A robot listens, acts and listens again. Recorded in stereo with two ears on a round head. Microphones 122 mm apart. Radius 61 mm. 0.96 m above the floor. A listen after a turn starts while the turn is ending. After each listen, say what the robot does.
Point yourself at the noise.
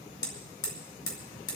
Turn 25° left.
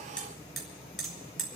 Found it: hammering, straight ahead.